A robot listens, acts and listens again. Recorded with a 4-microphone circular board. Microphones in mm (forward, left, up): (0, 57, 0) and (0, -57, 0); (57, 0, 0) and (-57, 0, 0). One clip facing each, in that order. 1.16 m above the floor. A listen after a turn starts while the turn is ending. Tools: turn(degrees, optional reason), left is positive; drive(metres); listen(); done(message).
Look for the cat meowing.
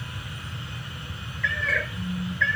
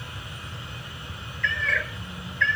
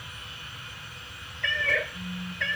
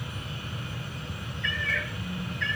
done("Found it: a cat meowing, straight ahead.")